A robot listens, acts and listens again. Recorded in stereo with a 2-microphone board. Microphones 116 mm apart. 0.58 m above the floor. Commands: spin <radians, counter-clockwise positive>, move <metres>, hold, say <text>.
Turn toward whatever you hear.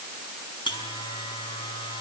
spin 0.70
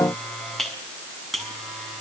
say Found it: a buzzer, straight ahead.